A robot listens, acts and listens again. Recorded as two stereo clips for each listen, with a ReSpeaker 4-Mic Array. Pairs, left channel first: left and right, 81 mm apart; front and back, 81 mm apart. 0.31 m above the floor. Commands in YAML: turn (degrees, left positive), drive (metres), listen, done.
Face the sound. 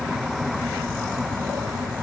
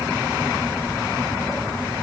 listen: true
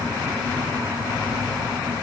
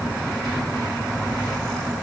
listen: true
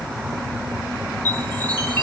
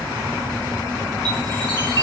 turn: 155
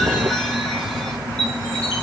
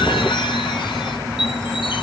turn: 10
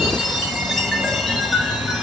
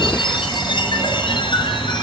done: "Facing the chime."